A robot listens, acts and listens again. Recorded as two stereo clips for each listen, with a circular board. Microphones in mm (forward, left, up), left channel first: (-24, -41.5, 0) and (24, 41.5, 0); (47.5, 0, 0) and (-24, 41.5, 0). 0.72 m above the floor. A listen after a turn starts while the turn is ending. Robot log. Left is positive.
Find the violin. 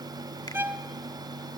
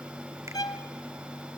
end: Found it: a violin, straight ahead, under 1 m away.